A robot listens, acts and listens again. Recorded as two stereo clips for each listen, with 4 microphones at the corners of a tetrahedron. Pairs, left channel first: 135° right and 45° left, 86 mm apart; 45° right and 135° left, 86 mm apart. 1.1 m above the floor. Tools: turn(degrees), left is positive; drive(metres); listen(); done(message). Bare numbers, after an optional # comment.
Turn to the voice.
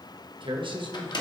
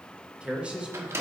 # The man speaking: 60° left.
turn(60)
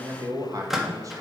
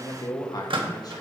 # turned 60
done("Facing the man speaking.")